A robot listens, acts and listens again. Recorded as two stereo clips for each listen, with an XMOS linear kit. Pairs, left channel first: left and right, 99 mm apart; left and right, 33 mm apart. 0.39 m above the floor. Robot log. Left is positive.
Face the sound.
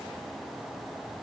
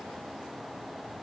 cmd idle
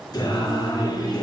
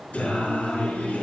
note: The singing: about 45° left or 135° left.
cmd yaw +45
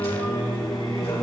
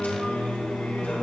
note: So it is at 85° left.
cmd yaw +85
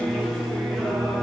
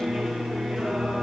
end: Found it: singing, straight ahead, over 4 m away.